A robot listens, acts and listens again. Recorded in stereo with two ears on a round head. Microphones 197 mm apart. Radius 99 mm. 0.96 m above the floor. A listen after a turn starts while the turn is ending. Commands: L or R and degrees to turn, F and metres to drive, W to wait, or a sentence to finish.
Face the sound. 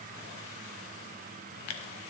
L90
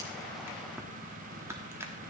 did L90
R10
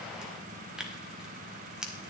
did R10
Facing the tearing paper, 1 to 2 m away.